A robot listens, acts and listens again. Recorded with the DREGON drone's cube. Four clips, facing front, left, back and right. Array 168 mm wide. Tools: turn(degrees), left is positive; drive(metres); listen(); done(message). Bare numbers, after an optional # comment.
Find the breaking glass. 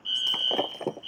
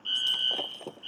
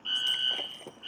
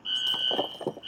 # The breaking glass: 35° right.
turn(-35)
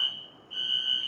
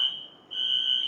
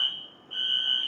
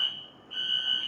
done("I heard breaking glass from this way, but can't make it out now.")